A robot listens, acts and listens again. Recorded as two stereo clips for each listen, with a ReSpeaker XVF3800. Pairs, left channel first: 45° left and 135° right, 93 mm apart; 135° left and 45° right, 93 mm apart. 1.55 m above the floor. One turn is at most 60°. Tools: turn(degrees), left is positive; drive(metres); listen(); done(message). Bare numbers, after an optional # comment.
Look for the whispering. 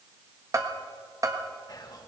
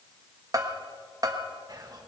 done("Facing the whispering, 1 to 2 m away.")